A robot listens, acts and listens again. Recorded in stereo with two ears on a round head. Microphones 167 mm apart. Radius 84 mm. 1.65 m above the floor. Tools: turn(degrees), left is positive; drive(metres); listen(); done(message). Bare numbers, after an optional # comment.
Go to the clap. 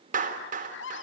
# The clap: about 45° right or 135° right.
turn(-45)
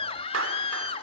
listen()
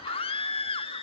listen()
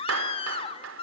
# So it is at 90° right.
turn(-90)
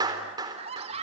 # The clap is now 20° right.
turn(-20)
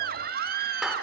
listen()
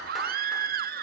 listen()
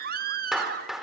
drive(1.0)
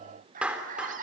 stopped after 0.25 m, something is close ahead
done("Something is in my way. I am facing the clap but have not reached it.")